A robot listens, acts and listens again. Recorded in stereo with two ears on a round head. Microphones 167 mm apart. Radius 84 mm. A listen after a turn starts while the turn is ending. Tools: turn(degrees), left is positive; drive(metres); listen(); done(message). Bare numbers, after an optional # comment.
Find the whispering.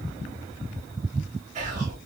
# The whispering: about 40° right or 140° right.
turn(-40)
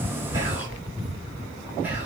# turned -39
# So it is at 10° right.
turn(-10)
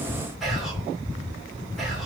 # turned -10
done("Facing the whispering.")